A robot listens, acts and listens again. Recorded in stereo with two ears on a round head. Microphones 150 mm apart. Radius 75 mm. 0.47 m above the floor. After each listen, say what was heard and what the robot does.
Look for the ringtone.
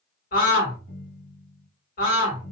The ringtone: about 60° left or 120° left. Turn 60° left.
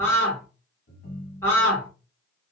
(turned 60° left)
So it is at 60° left. Turn 60° left.
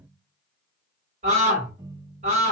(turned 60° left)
The ringtone is now 10° right. Turn 10° right.
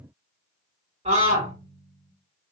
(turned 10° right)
Found it: a ringtone, straight ahead, 1 to 2 m away.